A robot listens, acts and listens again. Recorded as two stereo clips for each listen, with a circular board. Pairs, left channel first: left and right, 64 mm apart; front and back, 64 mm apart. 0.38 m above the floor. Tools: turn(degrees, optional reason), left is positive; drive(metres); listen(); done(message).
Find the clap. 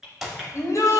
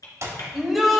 turn(degrees=-170, reason="The clap: 170° right.")
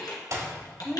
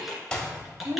turn(degrees=-75, reason="The clap is now 75° right.")
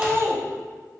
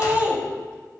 listen()
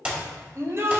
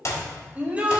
turn(degrees=-20, reason="The clap is now 20° right.")
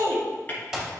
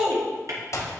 turn(degrees=-10, reason="The clap is now 10° right.")
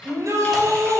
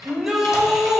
listen()
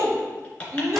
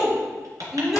listen()
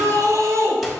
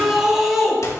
done("I heard a clap from this way, but can't make it out now.")